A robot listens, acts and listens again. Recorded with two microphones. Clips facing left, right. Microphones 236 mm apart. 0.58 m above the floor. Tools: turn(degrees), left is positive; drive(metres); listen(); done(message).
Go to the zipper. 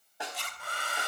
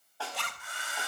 turn(degrees=-70)
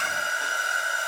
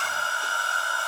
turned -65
listen()
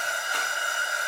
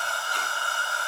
listen()
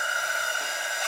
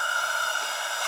done("I heard a zipper, but can't make it out now. It was about 5° right or 45° right. I did not reach it.")